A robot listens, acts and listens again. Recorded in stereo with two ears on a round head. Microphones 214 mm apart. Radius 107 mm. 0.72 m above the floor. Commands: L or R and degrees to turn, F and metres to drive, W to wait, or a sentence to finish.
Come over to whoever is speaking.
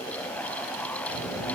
L40
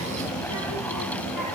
L100
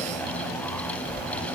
L25
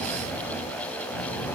L10
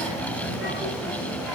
R10
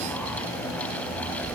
F1.0
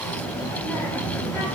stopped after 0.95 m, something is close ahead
L10
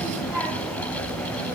I am next to the child speaking.